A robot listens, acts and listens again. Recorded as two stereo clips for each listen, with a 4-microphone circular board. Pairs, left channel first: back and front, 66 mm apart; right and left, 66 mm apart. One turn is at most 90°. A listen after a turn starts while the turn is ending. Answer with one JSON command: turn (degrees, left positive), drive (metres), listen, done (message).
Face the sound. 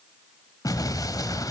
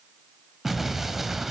{"turn": 90}
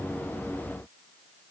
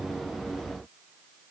{"turn": 85}
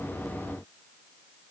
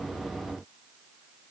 {"done": "Facing where the explosion came from. I can't hear it now."}